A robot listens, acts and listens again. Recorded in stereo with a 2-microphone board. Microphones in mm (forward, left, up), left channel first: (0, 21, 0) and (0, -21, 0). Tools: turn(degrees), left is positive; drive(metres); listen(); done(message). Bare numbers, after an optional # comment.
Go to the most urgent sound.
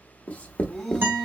turn(30)
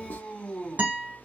# So it is at 150° left.
turn(150)
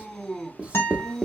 drive(1.0)
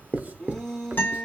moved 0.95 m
# The shout is now 15° left.
turn(15)
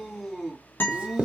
drive(1.0)
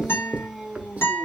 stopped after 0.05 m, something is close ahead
done("Arrived at the shout, straight ahead.")